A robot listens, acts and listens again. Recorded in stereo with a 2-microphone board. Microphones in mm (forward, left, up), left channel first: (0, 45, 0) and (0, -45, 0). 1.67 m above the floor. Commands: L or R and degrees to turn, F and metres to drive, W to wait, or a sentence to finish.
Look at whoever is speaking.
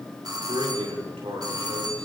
R90
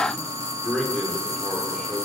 Found it: a man speaking, straight ahead.